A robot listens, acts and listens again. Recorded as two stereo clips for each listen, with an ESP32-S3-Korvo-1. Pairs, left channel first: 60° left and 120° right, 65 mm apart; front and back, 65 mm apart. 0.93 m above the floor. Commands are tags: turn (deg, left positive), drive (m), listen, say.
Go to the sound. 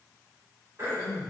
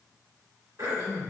<turn deg="-165"/>
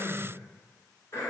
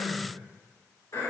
<turn deg="20"/>
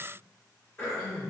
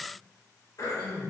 <drive m="1.0"/>
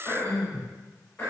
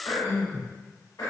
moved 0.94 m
<drive m="1.0"/>
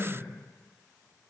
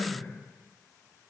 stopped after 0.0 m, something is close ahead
<say>Arrived at the throat clearing, straight ahead.</say>